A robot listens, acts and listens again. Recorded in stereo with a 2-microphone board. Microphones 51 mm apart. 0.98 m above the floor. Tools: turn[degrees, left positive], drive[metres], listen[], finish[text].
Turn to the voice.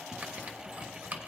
Action: listen[]
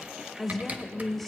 Action: turn[30]
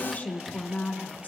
Thought: So it is at 145° left.
Action: turn[145]
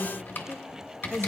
Action: finish[Found it: a woman speaking, straight ahead.]